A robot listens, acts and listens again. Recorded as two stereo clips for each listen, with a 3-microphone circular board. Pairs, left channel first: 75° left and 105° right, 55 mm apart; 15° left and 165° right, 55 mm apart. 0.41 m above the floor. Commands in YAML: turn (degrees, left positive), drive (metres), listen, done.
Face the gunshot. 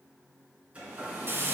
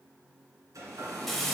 listen: true
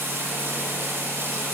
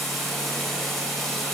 listen: true
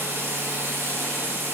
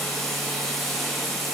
done: "I can't make out a gunshot to turn to."